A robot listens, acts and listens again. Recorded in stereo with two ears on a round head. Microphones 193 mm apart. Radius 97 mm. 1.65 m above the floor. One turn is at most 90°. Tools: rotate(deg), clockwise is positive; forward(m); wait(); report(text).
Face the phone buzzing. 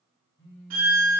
rotate(-25)
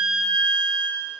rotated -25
wait()
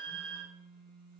report("Facing the phone buzzing, 1 to 2 m away.")